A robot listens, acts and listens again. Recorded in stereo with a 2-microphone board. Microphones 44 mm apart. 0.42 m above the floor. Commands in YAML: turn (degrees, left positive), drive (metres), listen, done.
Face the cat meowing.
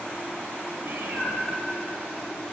turn: -60
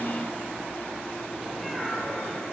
done: "Found it: a cat meowing, straight ahead, 2 to 4 m away."